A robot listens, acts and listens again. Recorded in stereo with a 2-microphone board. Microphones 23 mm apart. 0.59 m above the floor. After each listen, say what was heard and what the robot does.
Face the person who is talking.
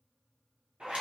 Keep listening.
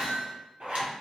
Keep listening.
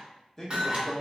The man speaking: about 15° left or 165° left. Turn 15° left.
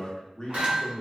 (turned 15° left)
So it is at 150° left. Turn 150° left.
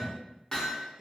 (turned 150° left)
Facing the man speaking.